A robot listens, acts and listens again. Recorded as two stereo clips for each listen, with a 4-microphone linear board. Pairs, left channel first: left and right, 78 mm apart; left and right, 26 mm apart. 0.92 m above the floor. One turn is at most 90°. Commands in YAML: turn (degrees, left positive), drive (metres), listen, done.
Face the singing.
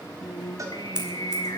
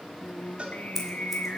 turn: 65
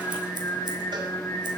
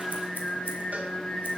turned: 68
turn: 35
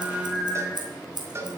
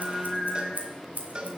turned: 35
done: "Found it: singing, straight ahead, 1 to 2 m away."